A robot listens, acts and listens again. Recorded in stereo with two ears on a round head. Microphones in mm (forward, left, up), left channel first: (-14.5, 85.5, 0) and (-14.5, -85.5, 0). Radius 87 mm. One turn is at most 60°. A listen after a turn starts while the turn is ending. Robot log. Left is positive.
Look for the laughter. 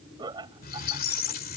note: The laughter: about 20° right or 160° right.
cmd yaw -20
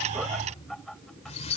end: Found it: laughter, straight ahead.